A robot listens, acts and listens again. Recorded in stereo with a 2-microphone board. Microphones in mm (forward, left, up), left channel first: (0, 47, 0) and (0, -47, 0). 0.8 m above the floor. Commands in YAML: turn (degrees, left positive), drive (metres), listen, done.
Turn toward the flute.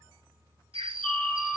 turn: 30
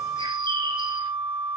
turn: -25
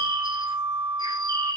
turn: -30
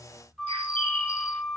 done: "Facing the flute."